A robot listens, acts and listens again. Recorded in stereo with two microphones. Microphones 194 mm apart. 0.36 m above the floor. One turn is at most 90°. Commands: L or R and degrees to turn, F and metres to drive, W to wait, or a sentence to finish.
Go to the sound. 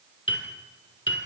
L90
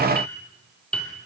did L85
F1.0
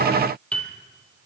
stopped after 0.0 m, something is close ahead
Something is in my way. I am facing the piano but have not reached it.